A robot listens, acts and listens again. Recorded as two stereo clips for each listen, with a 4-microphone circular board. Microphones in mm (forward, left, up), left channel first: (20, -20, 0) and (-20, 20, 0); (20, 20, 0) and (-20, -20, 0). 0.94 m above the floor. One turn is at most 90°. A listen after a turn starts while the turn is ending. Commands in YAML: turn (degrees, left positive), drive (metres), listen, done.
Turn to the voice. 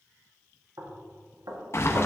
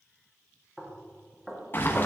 listen: true
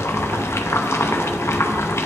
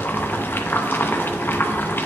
listen: true
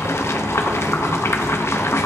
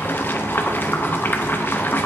done: "I can't make out anyone speaking, only knocking and boiling."